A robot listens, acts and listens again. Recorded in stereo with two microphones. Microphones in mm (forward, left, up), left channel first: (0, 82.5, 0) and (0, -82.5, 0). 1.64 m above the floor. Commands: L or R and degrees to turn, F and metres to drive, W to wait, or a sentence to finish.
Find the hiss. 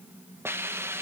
R30
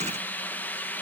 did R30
L10
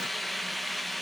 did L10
Found it: a hiss, straight ahead, 1 to 2 m away.